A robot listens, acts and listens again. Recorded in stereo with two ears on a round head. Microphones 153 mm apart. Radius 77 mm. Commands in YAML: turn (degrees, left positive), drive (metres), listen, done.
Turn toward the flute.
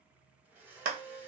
turn: 45
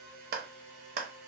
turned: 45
listen: true
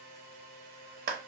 turn: 85
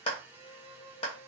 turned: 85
turn: -25
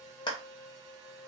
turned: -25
turn: -15
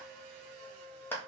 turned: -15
done: "Facing the flute, under 1 m away."